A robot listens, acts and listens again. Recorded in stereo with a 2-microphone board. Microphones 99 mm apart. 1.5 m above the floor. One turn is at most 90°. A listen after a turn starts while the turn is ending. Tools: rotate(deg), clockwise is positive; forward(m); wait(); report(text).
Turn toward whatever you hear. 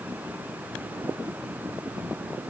wait()
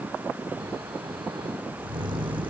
rotate(55)
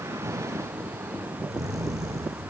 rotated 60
rotate(45)
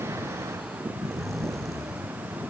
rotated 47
report("Found it: snoring, straight ahead, 1 to 2 m away.")